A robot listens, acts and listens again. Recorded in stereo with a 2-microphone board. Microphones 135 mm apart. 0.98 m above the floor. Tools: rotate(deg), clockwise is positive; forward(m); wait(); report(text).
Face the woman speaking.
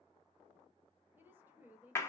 rotate(30)
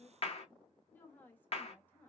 rotate(-15)
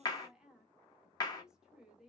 report("Found it: a woman speaking, straight ahead, 1 to 2 m away.")